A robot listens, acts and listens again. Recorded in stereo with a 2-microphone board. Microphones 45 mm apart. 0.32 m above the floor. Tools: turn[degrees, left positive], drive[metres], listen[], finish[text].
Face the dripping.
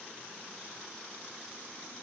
Action: listen[]
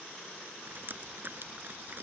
Thought: The dripping: about 45° right or 135° right.
Action: turn[-45]
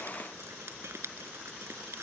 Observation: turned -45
Thought: So it is at 90° right.
Action: turn[-90]
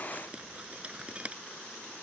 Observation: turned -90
Thought: The dripping is now 30° right.
Action: turn[-30]
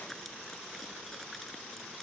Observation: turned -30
Action: listen[]
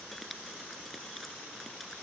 Action: listen[]
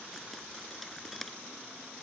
Action: finish[Found it: dripping, straight ahead.]